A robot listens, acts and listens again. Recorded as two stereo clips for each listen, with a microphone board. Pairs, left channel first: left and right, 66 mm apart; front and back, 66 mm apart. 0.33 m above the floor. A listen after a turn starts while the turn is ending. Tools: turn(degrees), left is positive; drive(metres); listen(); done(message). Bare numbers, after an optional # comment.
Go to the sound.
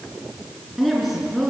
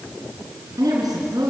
# The woman speaking: straight behind.
turn(180)
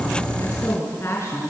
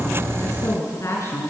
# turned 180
# The woman speaking is now 40° left.
turn(40)
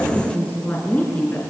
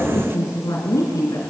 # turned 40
# The woman speaking is now 25° left.
turn(25)
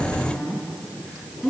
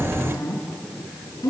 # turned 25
drive(1.0)
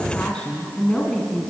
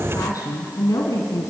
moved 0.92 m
# The woman speaking is now 15° left.
turn(15)
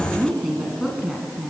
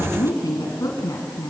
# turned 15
drive(1.0)
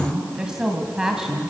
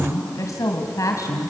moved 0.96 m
# The woman speaking is now 10° right.
turn(-10)
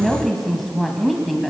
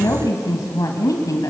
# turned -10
drive(1.0)
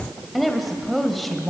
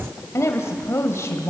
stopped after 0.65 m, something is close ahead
done("Arrived at the woman speaking, straight ahead.")